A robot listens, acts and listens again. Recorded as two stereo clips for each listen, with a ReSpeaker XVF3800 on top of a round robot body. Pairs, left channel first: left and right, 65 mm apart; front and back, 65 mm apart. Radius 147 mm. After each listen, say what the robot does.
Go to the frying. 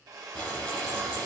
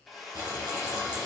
Turn 165° left.
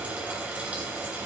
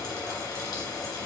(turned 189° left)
Turn 20° right.
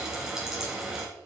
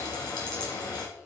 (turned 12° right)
Turn 10° right.
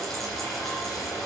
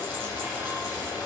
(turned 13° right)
Drive 1.0 m forward.
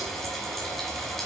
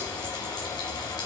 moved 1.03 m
Drive 1.0 m forward.
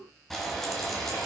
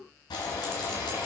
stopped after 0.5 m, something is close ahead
I am next to the frying.